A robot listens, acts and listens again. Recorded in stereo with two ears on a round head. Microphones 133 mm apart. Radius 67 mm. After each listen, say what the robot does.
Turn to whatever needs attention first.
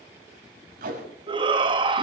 Turn 30° right.
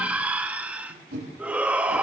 Turn 10° right.
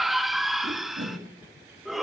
Facing the shout, 1 to 2 m away.